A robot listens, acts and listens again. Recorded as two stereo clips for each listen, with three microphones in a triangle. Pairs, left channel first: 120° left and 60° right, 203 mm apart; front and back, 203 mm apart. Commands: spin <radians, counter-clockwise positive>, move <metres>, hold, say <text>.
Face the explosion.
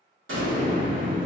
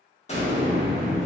spin -0.96
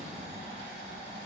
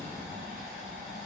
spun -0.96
say Facing where the explosion came from. I can't hear it now.